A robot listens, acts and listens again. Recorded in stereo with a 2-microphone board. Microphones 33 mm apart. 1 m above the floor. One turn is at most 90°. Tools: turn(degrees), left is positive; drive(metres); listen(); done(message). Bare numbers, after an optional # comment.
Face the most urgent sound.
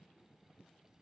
listen()
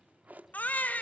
# The baby crying: about 55° left or 125° left.
turn(55)
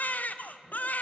# So it is at 65° left.
turn(65)
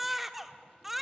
done("Found it: a baby crying, straight ahead.")